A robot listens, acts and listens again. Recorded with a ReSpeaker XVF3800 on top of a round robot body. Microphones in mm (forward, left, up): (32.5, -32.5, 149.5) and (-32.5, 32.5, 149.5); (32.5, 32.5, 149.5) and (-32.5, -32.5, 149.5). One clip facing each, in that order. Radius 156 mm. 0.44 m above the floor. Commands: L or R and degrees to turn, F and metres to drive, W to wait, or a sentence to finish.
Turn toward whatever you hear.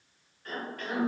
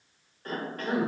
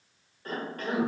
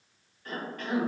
L90
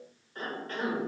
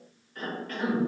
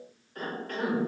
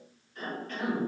L10
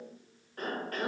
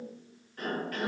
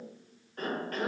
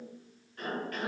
Facing the cough, 1 to 2 m away.